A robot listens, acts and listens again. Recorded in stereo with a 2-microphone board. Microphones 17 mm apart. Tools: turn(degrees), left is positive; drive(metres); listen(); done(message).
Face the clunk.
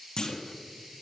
turn(degrees=40)
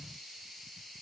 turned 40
listen()
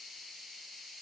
done("I heard a clunk, but can't make it out now. It was about straight ahead or 100° left.")